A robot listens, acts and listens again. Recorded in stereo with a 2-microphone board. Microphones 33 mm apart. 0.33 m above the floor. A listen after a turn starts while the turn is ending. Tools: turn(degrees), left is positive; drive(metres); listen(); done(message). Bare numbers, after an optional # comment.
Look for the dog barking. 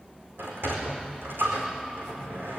listen()
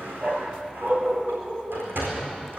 # The dog barking: about 55° right or 125° right.
turn(-55)
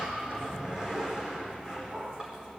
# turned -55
# So it is at 55° right.
turn(-55)
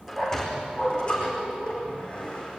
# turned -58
done("Facing the dog barking, 2 to 4 m away.")